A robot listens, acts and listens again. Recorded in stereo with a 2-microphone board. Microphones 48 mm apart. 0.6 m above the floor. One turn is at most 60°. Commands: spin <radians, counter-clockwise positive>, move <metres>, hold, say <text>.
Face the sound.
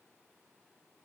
hold
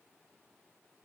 hold
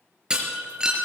spin -0.52
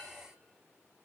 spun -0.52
hold
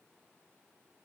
say I heard breaking glass, but can't make it out now. It was about 15° left or 135° right.